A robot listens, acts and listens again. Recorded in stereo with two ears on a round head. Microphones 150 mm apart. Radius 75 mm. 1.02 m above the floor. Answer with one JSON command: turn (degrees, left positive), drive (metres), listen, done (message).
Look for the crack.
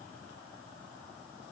{"listen": true}
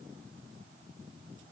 {"listen": true}
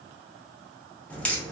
{"turn": 30}
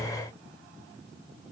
{"listen": true}
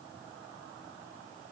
{"done": "I heard a crack, but can't make it out now. It was about 20° right or 140° left."}